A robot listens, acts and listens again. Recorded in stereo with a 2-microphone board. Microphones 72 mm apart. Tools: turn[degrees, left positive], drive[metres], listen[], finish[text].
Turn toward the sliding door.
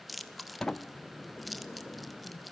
Action: turn[30]
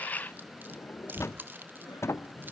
Thought: So it is at 140° left.
Action: turn[140]
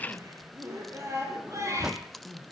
Thought: The sliding door is now 10° right.
Action: turn[-10]
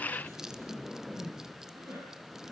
Action: finish[Facing the sliding door, under 1 m away.]